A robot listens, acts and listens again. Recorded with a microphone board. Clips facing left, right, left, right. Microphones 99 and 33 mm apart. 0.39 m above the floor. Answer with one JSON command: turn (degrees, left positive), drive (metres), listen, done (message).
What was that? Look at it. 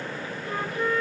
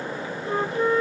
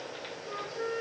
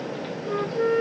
{"turn": -30}
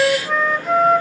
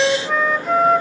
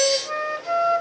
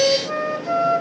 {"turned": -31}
{"done": "Facing the flute, under 1 m away."}